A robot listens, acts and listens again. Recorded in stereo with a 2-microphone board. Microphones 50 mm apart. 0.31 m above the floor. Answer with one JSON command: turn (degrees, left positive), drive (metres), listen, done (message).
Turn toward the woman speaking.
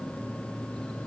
{"listen": true}
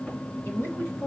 {"turn": 50}
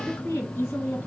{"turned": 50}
{"turn": 65}
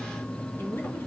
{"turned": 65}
{"turn": 40}
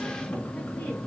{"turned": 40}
{"listen": true}
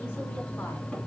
{"listen": true}
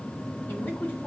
{"turn": 35}
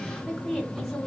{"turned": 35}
{"done": "Facing the woman speaking."}